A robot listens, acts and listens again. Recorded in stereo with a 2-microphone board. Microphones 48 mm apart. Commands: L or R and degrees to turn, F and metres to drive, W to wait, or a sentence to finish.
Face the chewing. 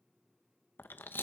L45
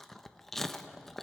L10
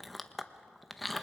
Facing the chewing, under 1 m away.